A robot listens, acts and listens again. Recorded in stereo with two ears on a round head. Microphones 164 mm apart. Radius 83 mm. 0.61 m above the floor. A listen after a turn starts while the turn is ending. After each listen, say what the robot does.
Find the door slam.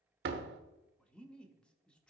Turn 65° right.
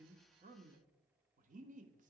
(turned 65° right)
Keep listening.
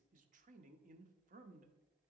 I heard a door slam, but can't make it out now. It was about straight ahead or 50° right.